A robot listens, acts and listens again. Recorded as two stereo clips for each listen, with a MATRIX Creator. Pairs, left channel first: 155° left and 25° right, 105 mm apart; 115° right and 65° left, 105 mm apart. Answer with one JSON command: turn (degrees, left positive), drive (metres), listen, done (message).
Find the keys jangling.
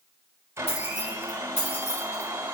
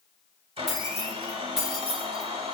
{"turn": 150}
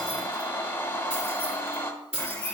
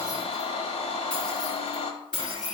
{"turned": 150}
{"turn": -30}
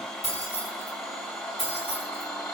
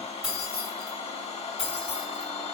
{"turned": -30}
{"turn": -15}
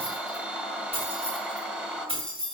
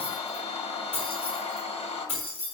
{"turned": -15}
{"done": "Found it: keys jangling, straight ahead, over 4 m away."}